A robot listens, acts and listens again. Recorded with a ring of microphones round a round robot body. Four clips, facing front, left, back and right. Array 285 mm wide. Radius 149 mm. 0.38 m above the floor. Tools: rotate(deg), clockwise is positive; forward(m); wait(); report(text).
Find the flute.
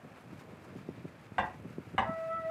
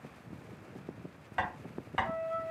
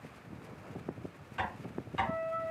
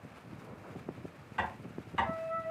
rotate(15)
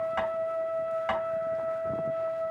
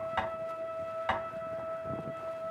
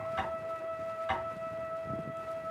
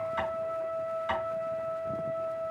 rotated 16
report("Found it: a flute, straight ahead, 2 to 4 m away.")